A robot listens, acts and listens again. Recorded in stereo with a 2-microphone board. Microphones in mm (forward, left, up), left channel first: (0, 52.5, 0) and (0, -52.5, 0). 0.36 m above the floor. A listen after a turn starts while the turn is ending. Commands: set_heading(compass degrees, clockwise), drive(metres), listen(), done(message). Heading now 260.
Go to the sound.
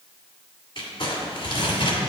set_heading(210)
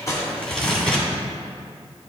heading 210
drive(1.0)
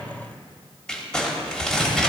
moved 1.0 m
set_heading(200)
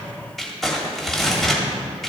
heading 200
drive(1.0)
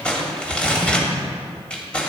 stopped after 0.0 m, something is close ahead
set_heading(190)
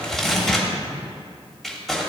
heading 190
done("Arrived at the crumpling, straight ahead.")